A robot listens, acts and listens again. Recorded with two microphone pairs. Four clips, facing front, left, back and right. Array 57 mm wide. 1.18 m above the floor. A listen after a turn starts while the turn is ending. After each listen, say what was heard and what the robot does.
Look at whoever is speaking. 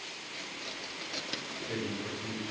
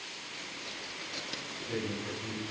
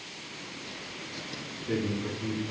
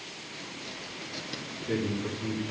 The man speaking: 145° right. Turn 145° right.
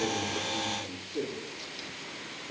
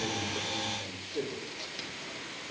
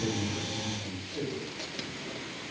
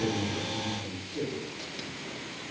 The man speaking is now 25° left. Turn 25° left.
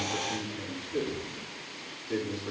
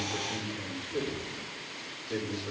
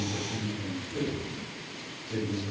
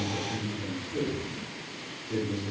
The man speaking is now 10° left. Turn 10° left.
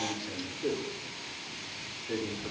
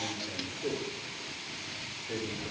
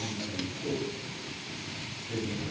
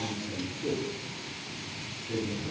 Facing the man speaking.